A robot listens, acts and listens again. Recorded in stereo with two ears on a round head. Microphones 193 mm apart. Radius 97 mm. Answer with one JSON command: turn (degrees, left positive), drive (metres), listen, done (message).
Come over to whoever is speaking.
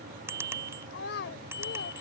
{"turn": 55}
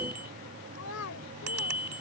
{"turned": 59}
{"turn": 70}
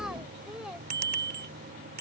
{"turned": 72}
{"listen": true}
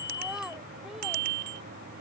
{"listen": true}
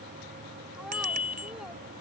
{"done": "Facing where the child speaking came from. I can't hear it now. I did not reach it."}